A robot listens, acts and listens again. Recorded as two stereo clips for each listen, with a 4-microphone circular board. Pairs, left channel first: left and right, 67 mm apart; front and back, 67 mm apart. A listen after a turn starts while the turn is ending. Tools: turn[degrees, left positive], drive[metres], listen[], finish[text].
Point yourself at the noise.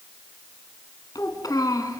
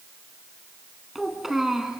Thought: The child speaking: 95° left.
Action: turn[95]
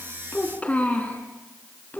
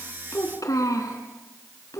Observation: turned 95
Thought: The child speaking is now 30° left.
Action: turn[30]
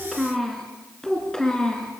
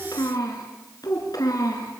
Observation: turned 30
Thought: The child speaking is now 15° left.
Action: turn[15]
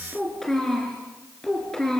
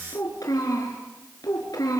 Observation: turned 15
Thought: The child speaking is now 10° left.
Action: turn[10]
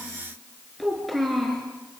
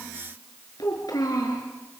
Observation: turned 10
Action: finish[Facing the child speaking.]